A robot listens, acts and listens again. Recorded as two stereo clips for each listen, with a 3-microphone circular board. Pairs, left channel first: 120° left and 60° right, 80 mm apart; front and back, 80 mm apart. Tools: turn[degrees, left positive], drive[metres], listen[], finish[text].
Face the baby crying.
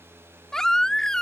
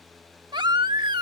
Thought: The baby crying: 155° right.
Action: turn[-155]
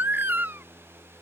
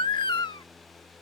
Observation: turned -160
Action: finish[Facing the baby crying.]